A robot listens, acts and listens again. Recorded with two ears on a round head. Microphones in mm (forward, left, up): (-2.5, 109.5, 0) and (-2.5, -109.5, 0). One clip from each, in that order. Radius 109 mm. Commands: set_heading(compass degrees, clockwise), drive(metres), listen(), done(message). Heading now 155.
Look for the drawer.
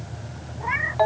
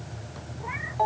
listen()
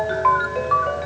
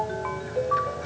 listen()
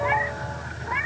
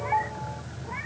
done("I can't make out a drawer to turn to.")